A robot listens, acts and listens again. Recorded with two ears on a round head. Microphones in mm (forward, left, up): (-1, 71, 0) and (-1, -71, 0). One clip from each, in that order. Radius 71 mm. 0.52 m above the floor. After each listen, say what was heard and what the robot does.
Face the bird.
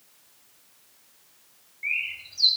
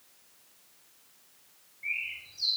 The bird: about 45° left or 135° left. Turn 45° left.
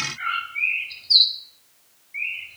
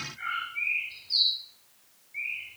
So it is at 85° left. Turn 85° left.
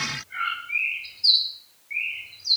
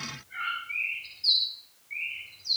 The bird is now 25° left. Turn 25° left.
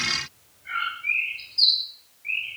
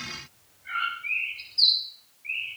Found it: a bird, straight ahead, 2 to 4 m away.